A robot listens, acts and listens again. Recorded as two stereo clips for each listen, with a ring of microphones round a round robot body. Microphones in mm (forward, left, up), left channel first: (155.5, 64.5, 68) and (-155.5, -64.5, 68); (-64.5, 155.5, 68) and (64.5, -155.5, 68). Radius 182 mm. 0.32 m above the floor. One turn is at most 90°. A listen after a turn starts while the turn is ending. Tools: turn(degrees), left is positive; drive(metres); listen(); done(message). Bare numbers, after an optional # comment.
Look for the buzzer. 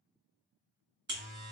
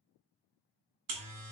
# The buzzer: 95° right.
turn(-90)
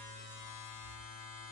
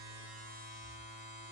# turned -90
done("Facing the buzzer, 1 to 2 m away.")